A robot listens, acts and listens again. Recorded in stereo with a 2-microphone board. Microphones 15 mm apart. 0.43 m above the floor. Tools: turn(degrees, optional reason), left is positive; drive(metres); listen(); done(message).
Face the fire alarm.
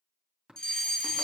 turn(degrees=45, reason="The fire alarm: about 45° left or 135° left.")
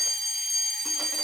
done("Found it: a fire alarm, straight ahead, over 4 m away.")